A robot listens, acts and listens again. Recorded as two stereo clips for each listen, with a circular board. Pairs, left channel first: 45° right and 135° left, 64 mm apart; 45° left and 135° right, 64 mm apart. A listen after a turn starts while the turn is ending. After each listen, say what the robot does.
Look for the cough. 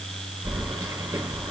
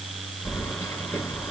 Keep listening.
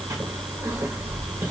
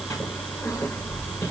Keep listening.
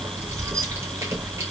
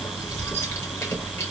I can't make out a cough, only keys jangling.